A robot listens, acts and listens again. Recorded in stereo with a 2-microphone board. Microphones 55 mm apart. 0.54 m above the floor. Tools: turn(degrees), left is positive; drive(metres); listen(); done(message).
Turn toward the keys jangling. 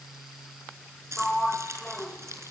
turn(degrees=-65)
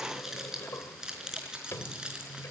turn(degrees=-15)
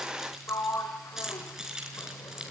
turn(degrees=-10)
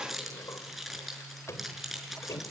done("Facing the keys jangling.")